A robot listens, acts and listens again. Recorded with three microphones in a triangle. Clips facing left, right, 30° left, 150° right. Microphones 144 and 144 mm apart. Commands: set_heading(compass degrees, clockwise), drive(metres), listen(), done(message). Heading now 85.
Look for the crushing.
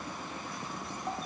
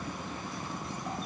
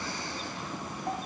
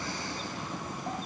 listen()
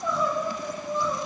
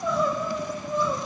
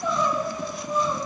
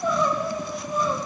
listen()
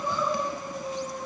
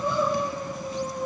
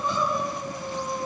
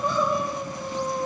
done("I can't make out crushing to turn to.")